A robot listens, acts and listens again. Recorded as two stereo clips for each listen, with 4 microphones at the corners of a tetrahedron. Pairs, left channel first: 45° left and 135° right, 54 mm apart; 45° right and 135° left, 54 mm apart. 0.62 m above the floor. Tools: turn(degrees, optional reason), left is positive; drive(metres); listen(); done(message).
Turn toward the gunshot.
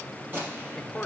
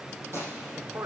turn(degrees=170, reason="The gunshot: 170° left.")
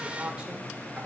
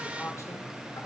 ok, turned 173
done("Facing where the gunshot came from. I can't hear it now.")